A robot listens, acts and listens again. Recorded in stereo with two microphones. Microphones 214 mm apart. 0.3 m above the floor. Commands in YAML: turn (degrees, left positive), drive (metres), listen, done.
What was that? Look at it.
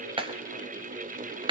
turn: -25
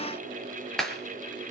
done: "Found it: a clap, straight ahead, over 4 m away."